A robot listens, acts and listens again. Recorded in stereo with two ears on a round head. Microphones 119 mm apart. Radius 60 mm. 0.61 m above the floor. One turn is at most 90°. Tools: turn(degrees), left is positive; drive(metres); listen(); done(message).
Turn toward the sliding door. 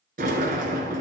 turn(degrees=-75)
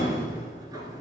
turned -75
turn(degrees=-25)
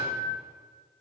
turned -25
turn(degrees=-10)
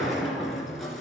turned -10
done("Found it: a sliding door, straight ahead, 1 to 2 m away.")